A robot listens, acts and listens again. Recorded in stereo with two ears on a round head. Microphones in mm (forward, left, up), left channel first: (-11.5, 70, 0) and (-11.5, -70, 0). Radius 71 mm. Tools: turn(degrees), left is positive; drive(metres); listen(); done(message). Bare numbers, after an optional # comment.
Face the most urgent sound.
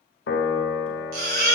# The baby crying: about 70° right or 110° right.
turn(-70)
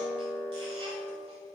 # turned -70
listen()
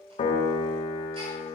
listen()
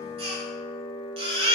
# So it is at 40° right.
turn(-40)
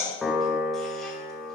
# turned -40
listen()
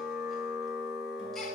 listen()
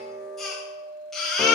done("Found it: a baby crying, straight ahead, 2 to 4 m away.")